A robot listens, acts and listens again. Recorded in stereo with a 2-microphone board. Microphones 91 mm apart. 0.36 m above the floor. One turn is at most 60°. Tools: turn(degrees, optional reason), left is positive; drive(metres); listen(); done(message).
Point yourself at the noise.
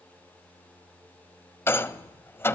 turn(degrees=25, reason="The rattle: about 25° left or 155° left.")
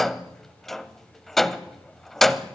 done("Facing the rattle.")